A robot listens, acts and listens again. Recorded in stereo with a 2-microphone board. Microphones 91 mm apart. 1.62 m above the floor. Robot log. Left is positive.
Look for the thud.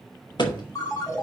note: The thud: about 55° left or 125° left.
cmd yaw +55
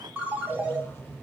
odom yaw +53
cmd idle
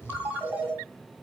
end: I heard a thud, but can't make it out now. It was about 5° left or 70° left.